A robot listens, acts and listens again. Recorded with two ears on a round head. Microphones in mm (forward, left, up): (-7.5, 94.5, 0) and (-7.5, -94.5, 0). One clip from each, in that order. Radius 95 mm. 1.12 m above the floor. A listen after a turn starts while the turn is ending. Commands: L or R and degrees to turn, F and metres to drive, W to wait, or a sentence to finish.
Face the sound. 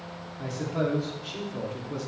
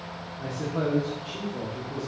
L60
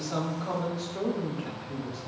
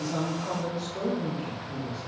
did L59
L20
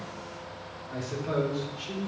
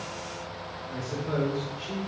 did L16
L20
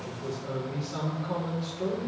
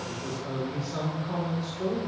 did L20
Found it: a man speaking, straight ahead, 2 to 4 m away.